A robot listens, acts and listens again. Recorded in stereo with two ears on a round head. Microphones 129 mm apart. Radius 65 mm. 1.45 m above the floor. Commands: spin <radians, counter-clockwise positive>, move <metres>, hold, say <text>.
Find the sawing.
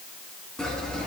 spin 0.52
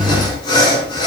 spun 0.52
spin 2.53
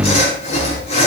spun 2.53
spin 0.79
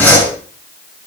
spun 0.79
spin 0.26
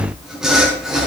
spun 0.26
say Facing the sawing.